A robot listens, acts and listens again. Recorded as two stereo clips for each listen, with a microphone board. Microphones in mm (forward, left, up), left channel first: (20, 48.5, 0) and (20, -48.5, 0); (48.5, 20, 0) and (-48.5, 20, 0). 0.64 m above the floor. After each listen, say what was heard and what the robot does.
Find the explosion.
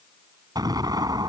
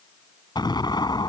The explosion: 45° right. Turn 45° right.
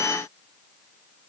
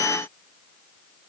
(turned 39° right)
Facing where the explosion came from. I can't hear it now.